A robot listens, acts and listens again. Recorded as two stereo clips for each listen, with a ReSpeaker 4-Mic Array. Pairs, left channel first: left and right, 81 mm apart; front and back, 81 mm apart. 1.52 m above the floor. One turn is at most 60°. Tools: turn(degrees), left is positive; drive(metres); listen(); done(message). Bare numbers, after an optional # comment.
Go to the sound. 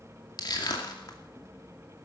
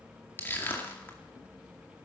# The crushing: 60° left.
turn(60)
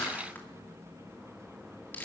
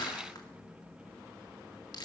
# The crushing is now 25° left.
turn(25)
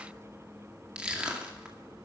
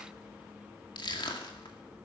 # The crushing is now 10° right.
turn(-10)
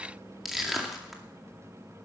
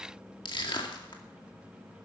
drive(1.0)
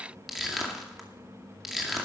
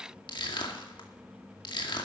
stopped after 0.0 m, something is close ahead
done("Blocked. The crushing is further on, straight ahead.")